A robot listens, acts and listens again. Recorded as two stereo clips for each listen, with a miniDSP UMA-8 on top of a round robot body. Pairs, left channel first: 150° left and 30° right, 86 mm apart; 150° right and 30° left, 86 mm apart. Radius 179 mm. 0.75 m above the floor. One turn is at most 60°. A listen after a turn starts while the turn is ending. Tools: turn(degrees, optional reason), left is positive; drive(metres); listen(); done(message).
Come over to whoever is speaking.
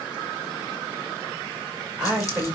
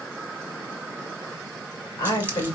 turn(degrees=-60, reason="The woman speaking: 110° right.")
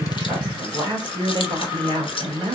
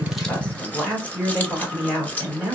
turn(degrees=-60, reason="The woman speaking is now 70° right.")
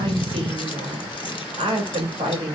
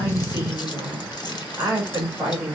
turn(degrees=-35, reason="The woman speaking is now 35° right.")
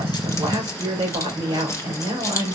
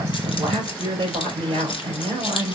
drive(metres=1.0)
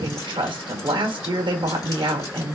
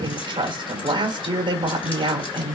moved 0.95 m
drive(metres=1.0)
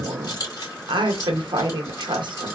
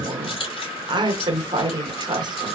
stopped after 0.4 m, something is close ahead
done("Arrived at the woman speaking, straight ahead.")